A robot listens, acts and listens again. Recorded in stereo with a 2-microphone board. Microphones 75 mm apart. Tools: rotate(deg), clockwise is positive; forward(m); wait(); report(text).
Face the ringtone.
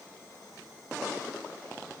wait()
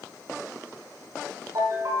rotate(50)
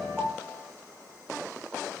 report("Facing the ringtone, over 4 m away.")